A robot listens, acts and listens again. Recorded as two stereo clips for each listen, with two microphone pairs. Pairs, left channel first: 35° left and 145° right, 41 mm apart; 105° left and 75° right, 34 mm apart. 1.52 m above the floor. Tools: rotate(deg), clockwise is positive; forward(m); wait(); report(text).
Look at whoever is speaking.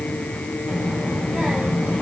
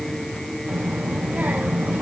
rotate(85)
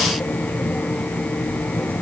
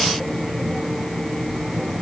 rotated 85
report("Facing the child speaking, over 4 m away.")